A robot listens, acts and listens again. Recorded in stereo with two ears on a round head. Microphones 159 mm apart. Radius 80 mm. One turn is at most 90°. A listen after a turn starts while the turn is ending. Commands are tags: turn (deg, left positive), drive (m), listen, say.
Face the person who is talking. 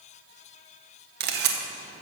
<listen/>
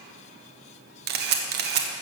<listen/>
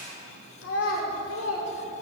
<turn deg="90"/>
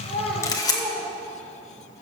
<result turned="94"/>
<turn deg="-15"/>
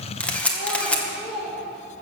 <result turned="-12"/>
<say>Found it: a child speaking, straight ahead.</say>